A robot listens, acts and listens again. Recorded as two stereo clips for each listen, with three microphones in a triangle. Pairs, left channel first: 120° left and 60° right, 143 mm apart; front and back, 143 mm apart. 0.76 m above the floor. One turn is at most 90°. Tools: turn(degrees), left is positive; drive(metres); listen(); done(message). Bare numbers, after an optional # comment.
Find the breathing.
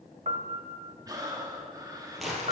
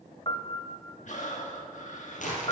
done("Found it: breathing, straight ahead.")